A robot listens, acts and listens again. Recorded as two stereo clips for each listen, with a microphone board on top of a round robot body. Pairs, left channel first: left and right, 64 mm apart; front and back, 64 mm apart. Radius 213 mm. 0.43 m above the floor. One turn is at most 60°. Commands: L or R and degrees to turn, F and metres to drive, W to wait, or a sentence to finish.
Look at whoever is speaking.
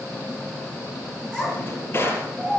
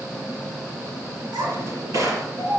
L60
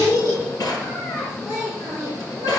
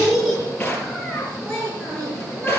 L60
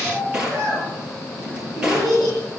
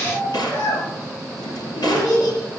R10
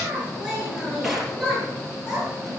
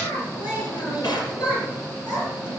Facing the child speaking.